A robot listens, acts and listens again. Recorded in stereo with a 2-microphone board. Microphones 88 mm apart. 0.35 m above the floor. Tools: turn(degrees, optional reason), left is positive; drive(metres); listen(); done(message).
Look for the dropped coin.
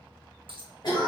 turn(degrees=-75, reason="The dropped coin: about 75° right or 105° right.")
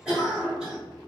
listen()
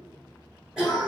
done("I heard a dropped coin, but can't make it out now. It was about straight ahead or 30° right.")